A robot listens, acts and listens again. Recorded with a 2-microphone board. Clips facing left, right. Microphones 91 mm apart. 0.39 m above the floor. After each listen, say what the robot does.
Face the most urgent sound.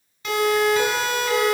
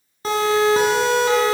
Turn 35° right.
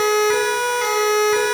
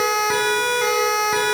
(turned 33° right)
Found it: a siren, straight ahead, over 4 m away.